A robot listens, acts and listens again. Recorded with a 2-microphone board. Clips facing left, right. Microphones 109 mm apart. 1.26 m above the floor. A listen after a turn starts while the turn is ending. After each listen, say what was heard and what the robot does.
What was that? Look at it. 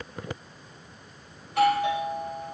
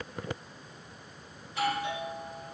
The doorbell: about 65° left or 115° left. Turn 65° left.
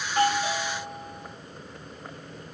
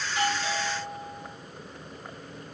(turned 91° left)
So it is at 20° left. Turn 20° left.
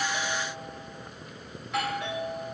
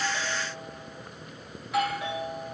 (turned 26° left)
Found it: a doorbell, straight ahead.